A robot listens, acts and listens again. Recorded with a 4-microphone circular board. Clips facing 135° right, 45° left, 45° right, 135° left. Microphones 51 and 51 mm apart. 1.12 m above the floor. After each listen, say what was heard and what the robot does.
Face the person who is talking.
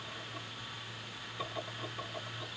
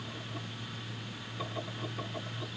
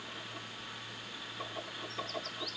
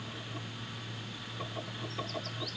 Keep listening.
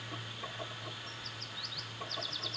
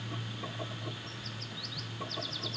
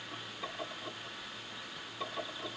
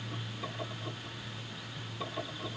Keep listening.
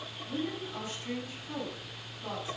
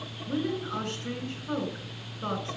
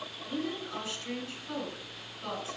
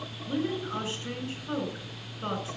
The woman speaking: 85° left. Turn 85° left.
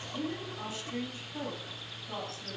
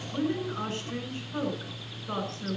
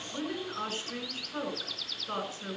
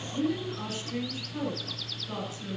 The woman speaking is now 10° left. Turn 10° left.
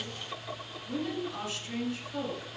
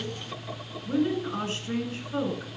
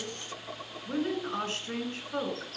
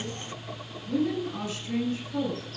Facing the woman speaking, over 4 m away.